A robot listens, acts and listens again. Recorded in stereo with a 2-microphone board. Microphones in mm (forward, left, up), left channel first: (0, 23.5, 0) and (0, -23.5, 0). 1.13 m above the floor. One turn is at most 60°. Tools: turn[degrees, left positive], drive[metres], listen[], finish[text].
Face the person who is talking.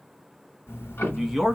Action: turn[-30]
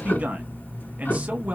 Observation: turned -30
Action: listen[]
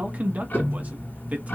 Thought: So it is at 145° right.
Action: turn[-60]
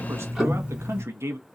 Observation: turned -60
Thought: The man speaking is now 80° right.
Action: turn[-60]
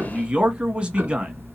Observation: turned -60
Thought: The man speaking is now 25° right.
Action: turn[-25]
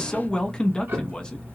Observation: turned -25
Thought: The man speaking is now 20° left.
Action: turn[20]
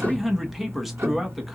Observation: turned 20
Action: finish[Facing the man speaking, 1 to 2 m away.]